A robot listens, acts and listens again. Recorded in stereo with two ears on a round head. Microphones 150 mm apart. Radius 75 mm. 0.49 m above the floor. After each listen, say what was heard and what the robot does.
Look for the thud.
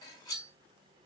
Keep listening.
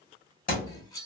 The thud: about 60° left or 120° left. Turn 60° left.
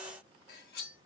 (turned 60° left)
Keep listening.
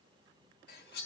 I heard a thud, but can't make it out now. It was about straight ahead or 60° left.